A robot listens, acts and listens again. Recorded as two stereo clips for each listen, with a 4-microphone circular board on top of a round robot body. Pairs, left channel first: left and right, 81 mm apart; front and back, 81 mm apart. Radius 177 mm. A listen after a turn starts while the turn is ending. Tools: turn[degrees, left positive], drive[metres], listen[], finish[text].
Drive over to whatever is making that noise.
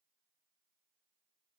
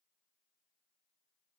Action: listen[]
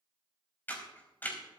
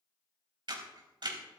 Thought: The camera shutter: 160° left.
Action: turn[160]
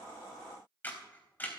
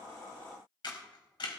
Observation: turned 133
Thought: The camera shutter is now 25° left.
Action: turn[25]
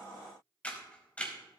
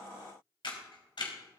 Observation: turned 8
Thought: The camera shutter is now 15° left.
Action: turn[15]
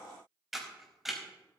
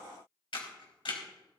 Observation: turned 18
Action: drive[1.0]
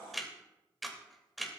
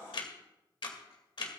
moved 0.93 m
Action: drive[1.0]
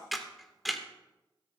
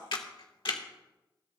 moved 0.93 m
Action: drive[1.0]
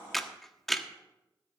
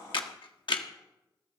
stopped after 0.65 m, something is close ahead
Action: finish[Arrived at the camera shutter, straight ahead.]